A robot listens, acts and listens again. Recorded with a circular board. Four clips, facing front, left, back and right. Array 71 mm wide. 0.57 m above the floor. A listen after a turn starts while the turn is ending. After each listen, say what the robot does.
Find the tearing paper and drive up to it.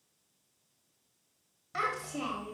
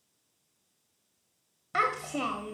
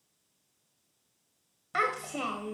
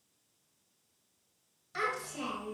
Keep listening.
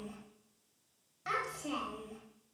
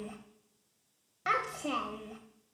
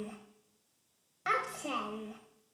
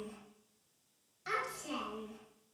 Keep listening.
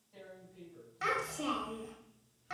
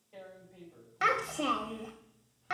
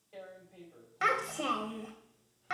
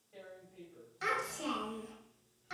Turn 160° left.
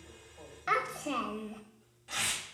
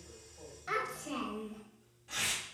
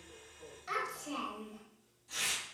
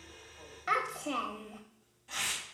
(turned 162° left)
Drive 1.0 m forward.
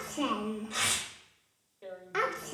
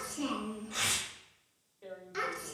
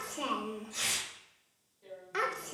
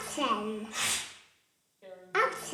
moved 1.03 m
Drive 1.0 m forward.
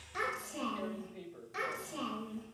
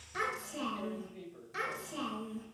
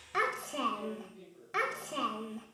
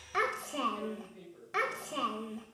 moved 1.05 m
Keep listening.
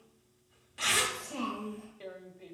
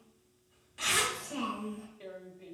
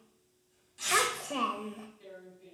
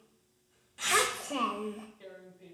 Turn 15° left.
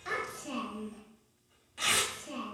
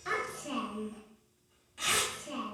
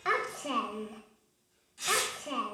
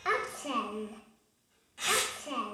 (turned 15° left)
Drive 1.0 m forward.
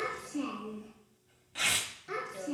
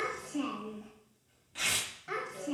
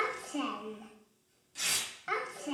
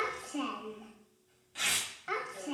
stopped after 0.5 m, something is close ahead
Arrived at the tearing paper, straight ahead.